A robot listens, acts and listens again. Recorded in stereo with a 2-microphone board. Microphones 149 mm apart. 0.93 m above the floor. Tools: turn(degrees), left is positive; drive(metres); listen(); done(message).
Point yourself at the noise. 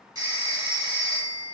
turn(degrees=-25)
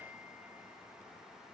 listen()
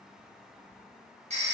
turn(degrees=-130)
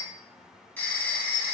turn(degrees=10)
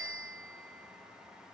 done("Found it: a phone ringing, straight ahead.")